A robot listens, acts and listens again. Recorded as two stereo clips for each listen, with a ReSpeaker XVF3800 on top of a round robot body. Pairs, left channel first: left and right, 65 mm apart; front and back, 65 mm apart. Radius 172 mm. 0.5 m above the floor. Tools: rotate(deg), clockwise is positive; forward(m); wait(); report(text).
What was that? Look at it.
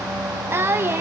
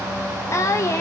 rotate(40)
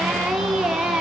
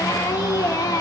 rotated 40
report("Found it: singing, straight ahead.")